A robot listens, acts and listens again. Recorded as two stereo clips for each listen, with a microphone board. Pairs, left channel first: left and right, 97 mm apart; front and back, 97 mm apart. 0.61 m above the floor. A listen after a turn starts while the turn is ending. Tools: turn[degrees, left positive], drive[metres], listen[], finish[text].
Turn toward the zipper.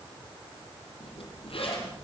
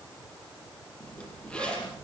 Thought: The zipper: 80° left.
Action: turn[80]
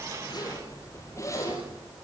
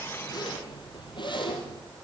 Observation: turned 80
Thought: The zipper is now 35° left.
Action: turn[35]
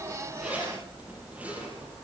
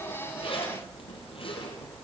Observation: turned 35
Thought: The zipper is now 15° right.
Action: turn[-15]
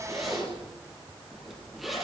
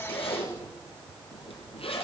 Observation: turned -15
Action: finish[Facing the zipper.]